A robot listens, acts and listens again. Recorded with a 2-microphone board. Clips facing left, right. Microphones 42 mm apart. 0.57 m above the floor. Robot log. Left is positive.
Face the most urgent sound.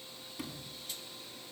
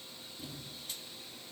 cmd idle
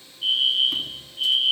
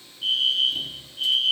cmd yaw +30
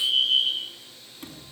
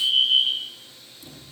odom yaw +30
note: So it is at 10° right.
cmd yaw -10
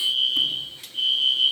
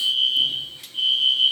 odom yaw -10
end: Facing the fire alarm, over 4 m away.